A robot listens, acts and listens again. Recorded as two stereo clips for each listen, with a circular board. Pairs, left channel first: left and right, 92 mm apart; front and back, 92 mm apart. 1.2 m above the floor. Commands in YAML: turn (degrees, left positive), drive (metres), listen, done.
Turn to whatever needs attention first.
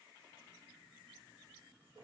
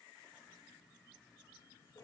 listen: true
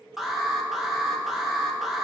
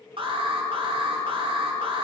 turn: -175
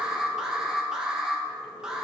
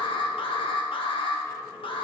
turn: -10
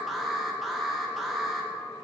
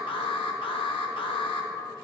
done: "Found it: an alarm, straight ahead, 1 to 2 m away."